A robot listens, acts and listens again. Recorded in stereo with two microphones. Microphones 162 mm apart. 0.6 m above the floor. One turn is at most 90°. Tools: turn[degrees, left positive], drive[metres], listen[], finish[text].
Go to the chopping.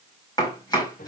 Thought: The chopping: about 25° left or 155° left.
Action: turn[25]
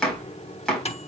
Action: drive[1.0]
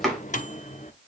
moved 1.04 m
Action: drive[1.0]
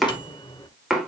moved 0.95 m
Action: drive[1.0]
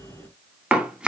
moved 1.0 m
Thought: The chopping is now 10° right.
Action: turn[-10]
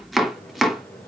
Action: drive[1.0]
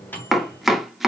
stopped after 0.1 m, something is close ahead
Action: finish[Arrived at the chopping, straight ahead.]